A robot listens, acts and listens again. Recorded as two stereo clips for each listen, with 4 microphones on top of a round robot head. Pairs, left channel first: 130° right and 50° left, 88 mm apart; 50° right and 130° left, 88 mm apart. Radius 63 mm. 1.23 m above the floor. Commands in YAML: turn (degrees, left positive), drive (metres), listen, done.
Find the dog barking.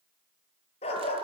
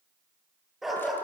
turn: -140
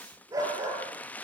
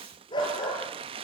done: "Found it: a dog barking, straight ahead, over 4 m away."